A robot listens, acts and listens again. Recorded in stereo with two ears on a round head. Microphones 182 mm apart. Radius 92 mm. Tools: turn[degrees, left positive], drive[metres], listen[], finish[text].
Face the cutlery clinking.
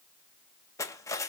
Thought: The cutlery clinking: about 15° left or 165° left.
Action: turn[15]
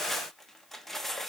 Action: finish[Found it: cutlery clinking, straight ahead, under 1 m away.]